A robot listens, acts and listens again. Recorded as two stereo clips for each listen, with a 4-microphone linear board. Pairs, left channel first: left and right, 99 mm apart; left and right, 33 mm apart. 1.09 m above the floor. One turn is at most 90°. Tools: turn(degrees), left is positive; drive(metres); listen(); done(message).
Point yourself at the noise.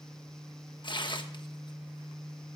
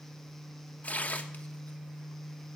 turn(degrees=50)
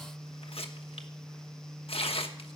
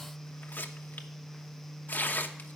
turn(degrees=75)
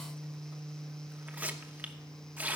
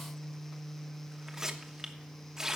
turn(degrees=-20)
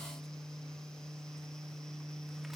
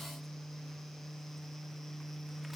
listen()
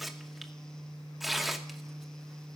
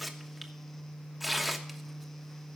done("Found it: tearing paper, straight ahead.")